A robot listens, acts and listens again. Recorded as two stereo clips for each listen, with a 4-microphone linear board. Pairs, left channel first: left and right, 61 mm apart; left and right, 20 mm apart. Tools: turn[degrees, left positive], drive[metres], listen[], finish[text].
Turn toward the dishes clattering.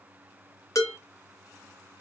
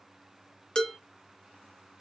Thought: The dishes clattering: about 60° left or 120° left.
Action: turn[60]
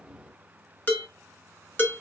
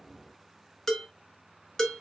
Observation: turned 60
Thought: So it is at 40° left.
Action: turn[40]
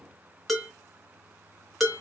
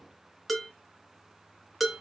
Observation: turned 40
Action: finish[Facing the dishes clattering, 1 to 2 m away.]